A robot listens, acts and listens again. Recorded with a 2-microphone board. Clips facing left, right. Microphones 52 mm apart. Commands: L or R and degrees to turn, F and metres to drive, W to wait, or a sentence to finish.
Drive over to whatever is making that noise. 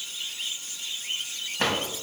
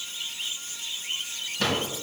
L35
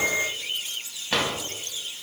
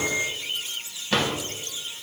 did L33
F1.0
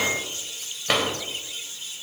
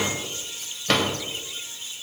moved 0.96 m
L10
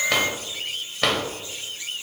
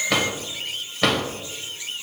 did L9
F1.0
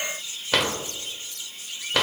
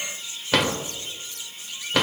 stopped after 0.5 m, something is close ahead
Arrived at the drawer, straight ahead.